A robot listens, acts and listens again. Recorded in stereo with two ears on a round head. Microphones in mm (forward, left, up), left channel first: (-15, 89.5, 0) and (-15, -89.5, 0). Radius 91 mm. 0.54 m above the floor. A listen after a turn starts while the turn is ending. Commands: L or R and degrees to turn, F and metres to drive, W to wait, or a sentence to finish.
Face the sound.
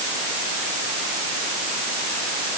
W
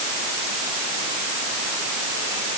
W
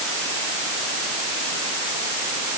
I can't make out anything to turn to.